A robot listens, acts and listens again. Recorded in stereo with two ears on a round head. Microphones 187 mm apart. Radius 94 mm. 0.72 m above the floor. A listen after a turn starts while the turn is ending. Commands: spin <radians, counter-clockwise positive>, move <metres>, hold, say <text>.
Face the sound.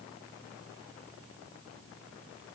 hold
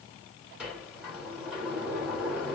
spin -0.52
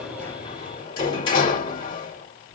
spin 0.44
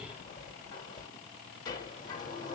spin 0.35
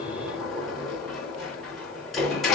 say Found it: a sliding door, straight ahead, 2 to 4 m away.